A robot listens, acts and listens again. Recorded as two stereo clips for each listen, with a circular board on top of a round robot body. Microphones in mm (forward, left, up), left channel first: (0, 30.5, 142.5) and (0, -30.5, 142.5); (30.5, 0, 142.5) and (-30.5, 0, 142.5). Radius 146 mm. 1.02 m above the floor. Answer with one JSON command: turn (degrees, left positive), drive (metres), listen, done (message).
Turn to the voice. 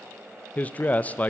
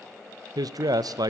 {"turn": 155}
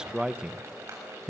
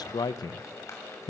{"turn": -10}
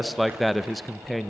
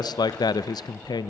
{"done": "Facing the man speaking, under 1 m away."}